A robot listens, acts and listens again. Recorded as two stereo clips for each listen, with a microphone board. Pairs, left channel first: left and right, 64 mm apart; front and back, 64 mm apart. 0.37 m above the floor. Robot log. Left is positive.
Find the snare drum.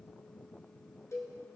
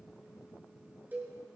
cmd idle
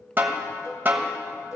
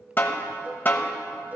note: The snare drum: 45° right.
cmd yaw -45
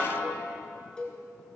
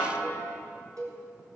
end: Facing the snare drum, 1 to 2 m away.